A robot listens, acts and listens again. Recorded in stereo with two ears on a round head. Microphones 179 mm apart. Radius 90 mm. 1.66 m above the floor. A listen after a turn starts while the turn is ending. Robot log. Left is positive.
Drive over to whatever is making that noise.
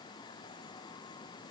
cmd idle
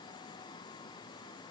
cmd idle
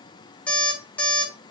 cmd yaw +30
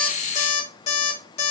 note: So it is at 145° left.
cmd yaw +145
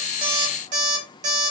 note: The alarm clock is now 40° right.
cmd yaw -40
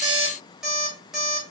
cmd fwd 1.0
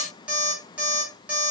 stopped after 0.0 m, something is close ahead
end: Something is in my way. I am facing the alarm clock but have not reached it.